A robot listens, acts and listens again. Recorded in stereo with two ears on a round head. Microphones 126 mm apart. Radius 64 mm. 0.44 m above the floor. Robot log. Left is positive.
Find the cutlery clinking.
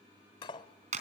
note: The cutlery clinking: about 35° left or 145° left.
cmd yaw +35
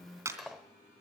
end: Found it: cutlery clinking, straight ahead.